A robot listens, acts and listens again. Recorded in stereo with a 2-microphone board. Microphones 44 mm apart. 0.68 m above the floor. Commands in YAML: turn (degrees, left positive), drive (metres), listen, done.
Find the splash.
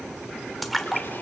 turn: 30
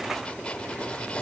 listen: true
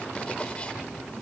done: "I heard a splash, but can't make it out now. It was about 30° right or 150° left."